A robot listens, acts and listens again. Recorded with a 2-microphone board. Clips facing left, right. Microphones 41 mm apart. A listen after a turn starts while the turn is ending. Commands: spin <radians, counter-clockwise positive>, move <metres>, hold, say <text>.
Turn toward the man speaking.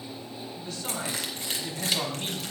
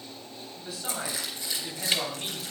spin -0.52
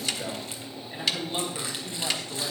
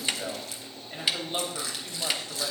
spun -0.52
spin -2.71
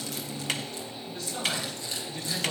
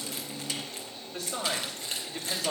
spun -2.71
spin -1.40
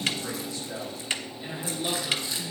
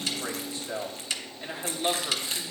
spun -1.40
spin -0.52
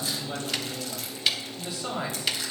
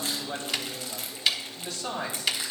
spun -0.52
spin 0.26
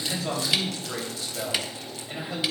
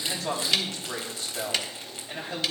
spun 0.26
say Found it: a man speaking, straight ahead, 2 to 4 m away.